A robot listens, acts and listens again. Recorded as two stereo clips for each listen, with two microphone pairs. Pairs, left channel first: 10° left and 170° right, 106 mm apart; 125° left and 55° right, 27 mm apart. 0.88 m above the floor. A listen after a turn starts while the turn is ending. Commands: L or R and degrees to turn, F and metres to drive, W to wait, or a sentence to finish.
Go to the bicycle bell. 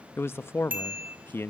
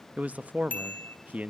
L120
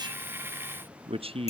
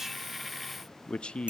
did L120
R10
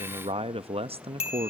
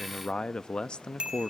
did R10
F1.0
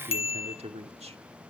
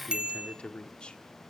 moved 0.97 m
R10
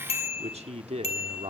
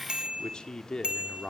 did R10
F1.0
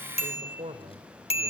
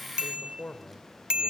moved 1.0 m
F1.0
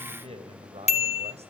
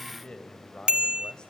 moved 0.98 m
F1.0
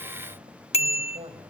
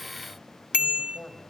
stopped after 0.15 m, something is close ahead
R10
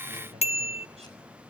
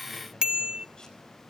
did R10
I am next to the bicycle bell.